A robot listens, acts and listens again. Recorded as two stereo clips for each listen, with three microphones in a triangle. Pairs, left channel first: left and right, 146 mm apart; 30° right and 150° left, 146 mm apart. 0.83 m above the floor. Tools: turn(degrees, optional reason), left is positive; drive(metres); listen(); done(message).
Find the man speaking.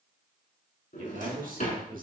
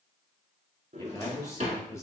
turn(degrees=-100, reason="The man speaking: 100° right.")
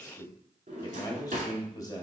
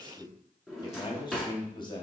turn(degrees=25, reason="The man speaking is now 25° left.")
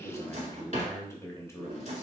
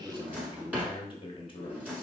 turn(degrees=20, reason="The man speaking is now 20° left.")
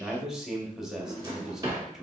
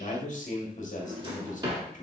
done("Facing the man speaking.")